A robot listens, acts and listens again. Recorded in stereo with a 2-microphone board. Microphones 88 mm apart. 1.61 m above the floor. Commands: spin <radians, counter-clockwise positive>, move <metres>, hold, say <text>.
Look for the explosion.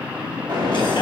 spin -0.96
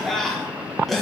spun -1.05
hold
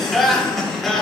say I heard an explosion, but can't make it out now. It was about 5° left or 65° right.